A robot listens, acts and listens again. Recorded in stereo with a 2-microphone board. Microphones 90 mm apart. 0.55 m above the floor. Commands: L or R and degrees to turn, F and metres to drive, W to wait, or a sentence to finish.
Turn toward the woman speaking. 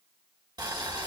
W
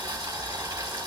W
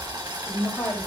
L30
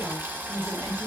R20
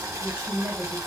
R15
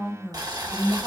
R10
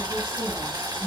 W
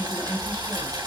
Found it: a woman speaking, straight ahead.